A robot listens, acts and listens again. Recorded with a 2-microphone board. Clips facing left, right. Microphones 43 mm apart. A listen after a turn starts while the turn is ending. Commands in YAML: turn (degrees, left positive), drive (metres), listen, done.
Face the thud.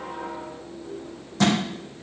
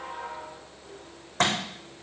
turn: -50
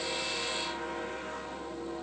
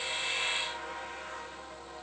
listen: true
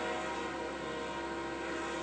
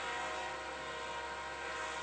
done: "I heard a thud, but can't make it out now. It was about straight ahead or 80° right."